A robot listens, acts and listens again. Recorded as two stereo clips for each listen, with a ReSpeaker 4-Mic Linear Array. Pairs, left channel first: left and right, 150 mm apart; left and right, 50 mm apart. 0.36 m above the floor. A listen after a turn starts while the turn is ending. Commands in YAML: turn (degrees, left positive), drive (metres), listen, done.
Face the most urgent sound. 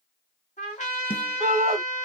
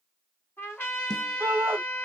turn: -55
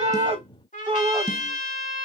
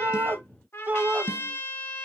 turn: -50
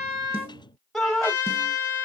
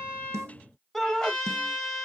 done: "Facing the shout."